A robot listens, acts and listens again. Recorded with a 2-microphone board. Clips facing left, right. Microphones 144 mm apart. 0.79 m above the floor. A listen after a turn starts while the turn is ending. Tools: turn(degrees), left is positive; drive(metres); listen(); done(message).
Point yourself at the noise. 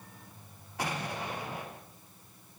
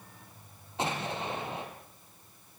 turn(degrees=-25)
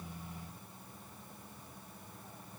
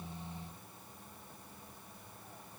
listen()
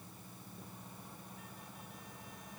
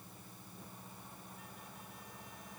done("I heard an explosion, but can't make it out now. It was about straight ahead or 130° right.")